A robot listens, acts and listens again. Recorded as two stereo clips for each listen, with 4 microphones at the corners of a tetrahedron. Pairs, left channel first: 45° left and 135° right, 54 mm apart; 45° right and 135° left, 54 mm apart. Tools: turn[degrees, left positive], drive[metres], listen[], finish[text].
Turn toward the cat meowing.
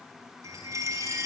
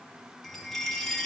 Action: listen[]
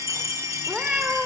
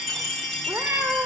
Thought: The cat meowing: 155° left.
Action: turn[155]
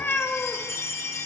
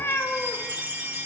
Thought: The cat meowing is now 10° right.
Action: turn[-10]
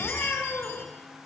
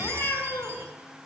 Action: finish[Facing the cat meowing.]